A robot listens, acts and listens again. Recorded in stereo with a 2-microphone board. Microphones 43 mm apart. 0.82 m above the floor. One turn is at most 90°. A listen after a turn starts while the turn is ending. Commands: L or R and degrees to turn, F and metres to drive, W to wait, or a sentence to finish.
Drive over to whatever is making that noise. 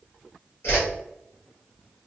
L90
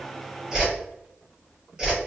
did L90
R15
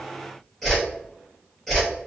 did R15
F1.0
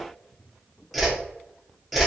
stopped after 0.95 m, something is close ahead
Arrived at the whoosh, straight ahead.